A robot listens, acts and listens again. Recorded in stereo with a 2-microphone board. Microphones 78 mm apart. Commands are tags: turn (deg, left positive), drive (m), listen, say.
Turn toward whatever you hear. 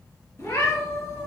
<turn deg="45"/>
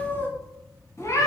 <turn deg="50"/>
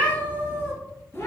<turn deg="40"/>
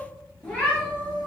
<turn deg="15"/>
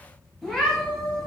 <say>Facing the cat meowing, 2 to 4 m away.</say>